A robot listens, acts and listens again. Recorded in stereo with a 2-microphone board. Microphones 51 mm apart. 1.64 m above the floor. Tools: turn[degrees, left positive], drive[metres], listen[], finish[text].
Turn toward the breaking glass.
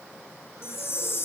Action: listen[]
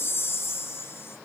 Action: listen[]
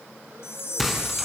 Action: turn[30]
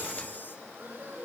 Action: listen[]
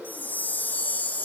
Action: finish[I heard breaking glass, but can't make it out now. It was about 30° right or 150° left.]